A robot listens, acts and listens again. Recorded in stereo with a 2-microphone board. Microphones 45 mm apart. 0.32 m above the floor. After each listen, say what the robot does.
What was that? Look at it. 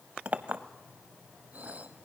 Turn 35° right.
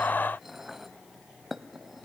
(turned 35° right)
Turn 10° right.
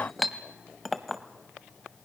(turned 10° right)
Found it: a clink, straight ahead, under 1 m away.